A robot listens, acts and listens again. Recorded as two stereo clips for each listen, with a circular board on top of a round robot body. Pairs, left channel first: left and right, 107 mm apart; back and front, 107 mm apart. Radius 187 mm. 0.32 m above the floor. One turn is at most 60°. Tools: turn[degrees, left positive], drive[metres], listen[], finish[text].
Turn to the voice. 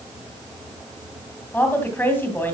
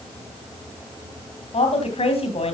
Thought: The woman speaking: 160° left.
Action: turn[60]
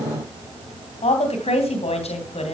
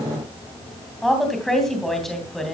Thought: The woman speaking is now 95° left.
Action: turn[60]
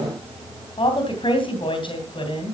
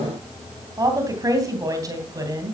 Thought: The woman speaking is now 55° left.
Action: turn[55]
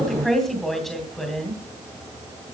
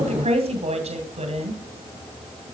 Action: finish[Found it: a woman speaking, straight ahead.]